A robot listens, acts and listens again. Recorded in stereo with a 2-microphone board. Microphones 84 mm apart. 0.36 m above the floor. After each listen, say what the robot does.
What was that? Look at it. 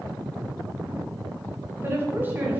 Turn 25° right.
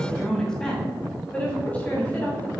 Turn 20° left.
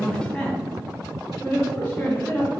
Turn 20° left.
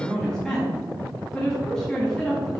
Facing the woman speaking.